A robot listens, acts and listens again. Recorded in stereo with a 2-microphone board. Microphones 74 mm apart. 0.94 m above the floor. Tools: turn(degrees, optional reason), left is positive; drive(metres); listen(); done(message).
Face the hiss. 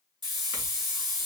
turn(degrees=-70, reason="The hiss: about 70° right or 110° right.")
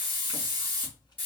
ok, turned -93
turn(degrees=25, reason="So it is at 25° left.")
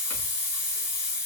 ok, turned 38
turn(degrees=-15, reason="The hiss is now 15° right.")
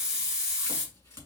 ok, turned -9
turn(degrees=-10, reason="The hiss is now 10° right.")
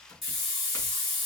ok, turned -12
done("Found it: a hiss, straight ahead, 2 to 4 m away.")